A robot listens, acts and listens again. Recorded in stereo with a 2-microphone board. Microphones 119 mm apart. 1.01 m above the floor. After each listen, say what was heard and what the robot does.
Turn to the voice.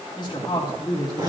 The woman speaking: about 40° left or 140° left. Turn 40° left.
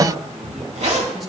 Keep listening.
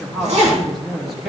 Facing the woman speaking.